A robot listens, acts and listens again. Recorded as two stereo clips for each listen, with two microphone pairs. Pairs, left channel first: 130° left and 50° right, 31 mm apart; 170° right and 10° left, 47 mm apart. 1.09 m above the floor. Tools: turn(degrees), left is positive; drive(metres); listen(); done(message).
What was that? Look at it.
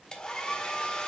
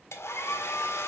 turn(degrees=-170)
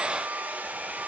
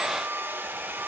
turn(degrees=-30)
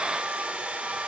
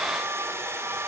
done("Found it: a hair dryer, straight ahead.")